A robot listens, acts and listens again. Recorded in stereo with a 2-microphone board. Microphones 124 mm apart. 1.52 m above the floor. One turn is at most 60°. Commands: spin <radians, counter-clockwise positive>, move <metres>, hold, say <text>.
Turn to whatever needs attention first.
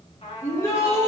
spin 0.44
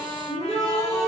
spin 1.05
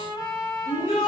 spin 1.05
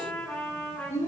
spin 1.05
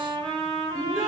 say Facing the shout.